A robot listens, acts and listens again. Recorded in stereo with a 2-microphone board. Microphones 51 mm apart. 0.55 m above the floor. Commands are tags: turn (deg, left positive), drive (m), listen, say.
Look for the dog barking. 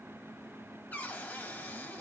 <listen/>
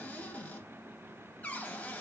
<listen/>
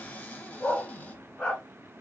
<turn deg="30"/>
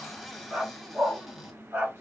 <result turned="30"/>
<turn deg="-35"/>
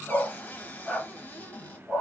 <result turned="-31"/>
<say>Found it: a dog barking, straight ahead.</say>